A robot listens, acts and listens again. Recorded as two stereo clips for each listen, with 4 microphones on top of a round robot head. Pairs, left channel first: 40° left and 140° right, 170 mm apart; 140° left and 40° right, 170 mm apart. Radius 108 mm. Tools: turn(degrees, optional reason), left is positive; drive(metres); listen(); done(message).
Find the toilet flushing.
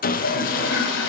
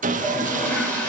turn(degrees=60, reason="The toilet flushing: 60° left.")
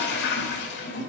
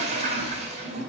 turn(degrees=15, reason="The toilet flushing is now 15° left.")
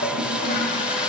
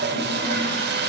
done("Found it: a toilet flushing, straight ahead.")